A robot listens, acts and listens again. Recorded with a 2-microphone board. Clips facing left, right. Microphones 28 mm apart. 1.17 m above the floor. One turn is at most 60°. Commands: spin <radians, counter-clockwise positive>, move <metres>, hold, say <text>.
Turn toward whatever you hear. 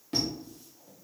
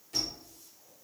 spin 0.79
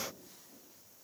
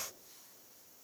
hold
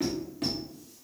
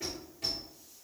spin 1.05
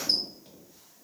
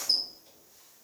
spin 0.79
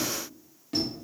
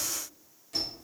spin 0.52
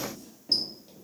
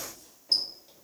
say Found it: a squeak, straight ahead.